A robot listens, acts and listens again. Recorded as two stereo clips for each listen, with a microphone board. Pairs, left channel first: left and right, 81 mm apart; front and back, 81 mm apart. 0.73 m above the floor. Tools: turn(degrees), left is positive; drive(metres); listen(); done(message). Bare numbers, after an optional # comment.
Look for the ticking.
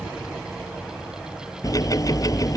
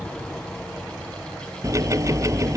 # The ticking: 130° left.
turn(130)
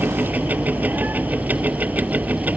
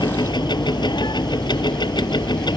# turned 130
# The ticking is now 20° right.
turn(-20)
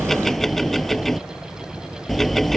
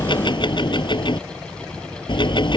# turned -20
done("Facing the ticking.")